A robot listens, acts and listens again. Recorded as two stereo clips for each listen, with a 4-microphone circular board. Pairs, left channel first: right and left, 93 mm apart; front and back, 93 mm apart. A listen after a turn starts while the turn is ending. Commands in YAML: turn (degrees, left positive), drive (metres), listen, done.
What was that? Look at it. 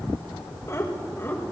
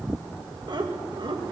turn: -155
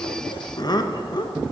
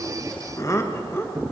turn: -65
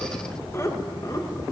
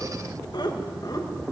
turn: -45
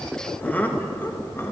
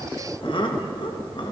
turn: -25
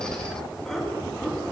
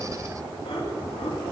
done: "Found it: laughter, straight ahead, 2 to 4 m away."